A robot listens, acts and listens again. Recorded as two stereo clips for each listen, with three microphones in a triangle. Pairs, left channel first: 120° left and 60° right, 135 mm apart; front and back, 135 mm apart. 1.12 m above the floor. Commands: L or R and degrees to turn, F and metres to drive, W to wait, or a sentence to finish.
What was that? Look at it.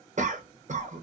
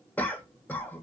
R75
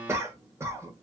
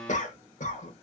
L10
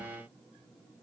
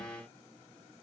W
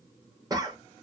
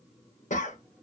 Found it: a cough, straight ahead.